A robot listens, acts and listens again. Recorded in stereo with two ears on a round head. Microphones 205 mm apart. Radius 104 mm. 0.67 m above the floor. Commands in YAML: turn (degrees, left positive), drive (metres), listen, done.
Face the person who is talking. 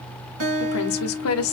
turn: 65
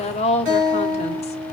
turn: 30
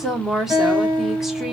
done: "Found it: a woman speaking, straight ahead, 1 to 2 m away."